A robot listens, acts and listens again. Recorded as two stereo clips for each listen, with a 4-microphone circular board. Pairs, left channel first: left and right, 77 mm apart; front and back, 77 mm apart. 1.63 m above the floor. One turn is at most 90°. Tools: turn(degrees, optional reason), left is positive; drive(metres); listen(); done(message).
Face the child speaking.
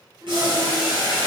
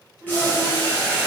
turn(degrees=-90, reason="The child speaking: 135° right.")
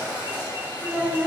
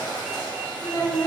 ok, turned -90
turn(degrees=-35, reason="The child speaking is now 35° right.")
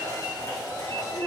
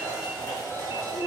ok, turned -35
turn(degrees=-10, reason="The child speaking is now 10° right.")
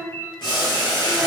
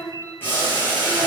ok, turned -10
listen()
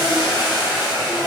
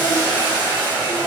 listen()
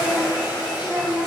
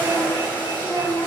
done("Facing the child speaking, 1 to 2 m away.")